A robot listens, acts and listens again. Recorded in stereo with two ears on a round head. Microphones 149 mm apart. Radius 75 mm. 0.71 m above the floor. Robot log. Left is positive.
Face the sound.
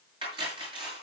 note: The cutlery clinking: about 30° right or 150° right.
cmd yaw -30
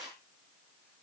end: Found it: cutlery clinking, straight ahead, over 4 m away.